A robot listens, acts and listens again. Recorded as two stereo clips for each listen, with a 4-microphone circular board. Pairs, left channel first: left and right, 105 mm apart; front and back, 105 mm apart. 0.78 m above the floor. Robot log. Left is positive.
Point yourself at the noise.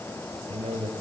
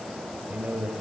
note: The man speaking: 105° right.
cmd yaw -105
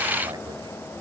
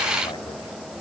cmd idle
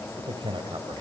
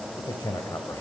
note: The man speaking is now 55° right.
cmd yaw -55
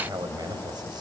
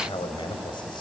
note: The man speaking is now 40° right.
cmd yaw -40
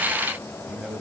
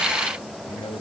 note: The man speaking is now 10° right.
cmd yaw -10
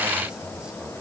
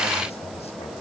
cmd idle
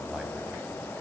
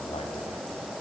end: Facing the man speaking, 2 to 4 m away.